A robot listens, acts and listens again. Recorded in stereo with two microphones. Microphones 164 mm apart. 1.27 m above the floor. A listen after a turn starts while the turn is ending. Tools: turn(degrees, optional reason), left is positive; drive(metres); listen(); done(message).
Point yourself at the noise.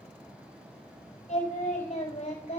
turn(degrees=50, reason="The singing: about 50° left or 130° left.")
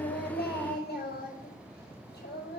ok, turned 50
turn(degrees=85, reason="So it is at 85° left.")
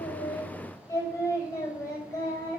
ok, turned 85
turn(degrees=20, reason="The singing is now 20° left.")
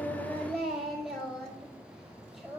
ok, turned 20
done("Found it: singing, straight ahead, over 4 m away.")